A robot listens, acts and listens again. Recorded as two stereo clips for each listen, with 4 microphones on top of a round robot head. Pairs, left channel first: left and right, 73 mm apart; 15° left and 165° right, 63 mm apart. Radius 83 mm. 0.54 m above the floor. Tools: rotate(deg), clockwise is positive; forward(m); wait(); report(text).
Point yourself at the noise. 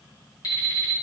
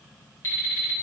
rotate(-60)
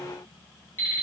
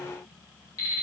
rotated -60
rotate(-35)
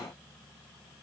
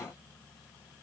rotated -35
wait()
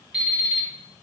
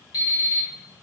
rotate(10)
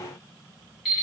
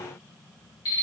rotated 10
report("Found it: an alarm clock, straight ahead, 1 to 2 m away.")